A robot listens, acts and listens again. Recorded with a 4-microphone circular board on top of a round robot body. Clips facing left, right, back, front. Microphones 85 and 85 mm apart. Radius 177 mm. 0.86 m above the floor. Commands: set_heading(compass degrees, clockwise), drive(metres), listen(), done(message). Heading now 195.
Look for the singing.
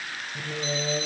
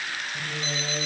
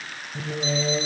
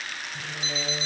set_heading(30)
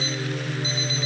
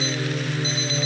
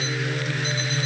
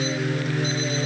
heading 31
set_heading(41)
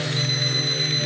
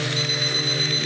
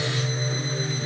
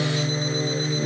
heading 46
done("Facing the singing.")